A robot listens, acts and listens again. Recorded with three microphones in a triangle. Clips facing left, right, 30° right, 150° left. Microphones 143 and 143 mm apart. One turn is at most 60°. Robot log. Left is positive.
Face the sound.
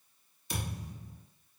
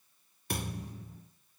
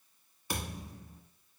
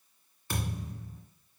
note: The thud: 105° right.
cmd yaw -60
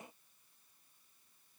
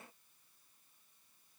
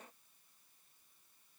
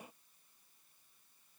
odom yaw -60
note: Nothing new. It was at 45° right.
cmd yaw -45
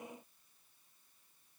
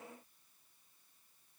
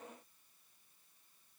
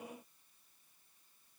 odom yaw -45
end: I heard a thud from this way, but can't make it out now.